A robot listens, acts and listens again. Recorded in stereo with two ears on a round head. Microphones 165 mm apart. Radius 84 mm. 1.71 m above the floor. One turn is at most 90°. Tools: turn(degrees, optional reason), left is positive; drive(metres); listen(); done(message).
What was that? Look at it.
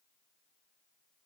listen()
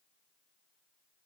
listen()
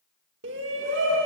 turn(degrees=-70, reason="The shout: about 70° right or 110° right.")
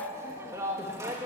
turn(degrees=-15, reason="So it is at 15° right.")
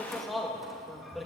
done("Facing the shout.")